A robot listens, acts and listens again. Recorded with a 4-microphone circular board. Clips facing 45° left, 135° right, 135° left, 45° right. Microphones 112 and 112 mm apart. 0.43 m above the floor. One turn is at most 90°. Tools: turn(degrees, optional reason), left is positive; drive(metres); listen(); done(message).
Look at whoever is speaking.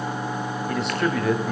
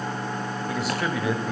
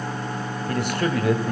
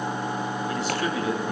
turn(degrees=90, reason="The man speaking: 135° left.")
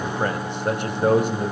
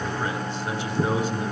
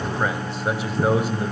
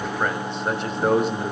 turn(degrees=50, reason="The man speaking is now 50° left.")
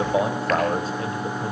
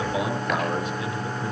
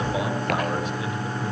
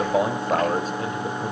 done("Found it: a man speaking, straight ahead.")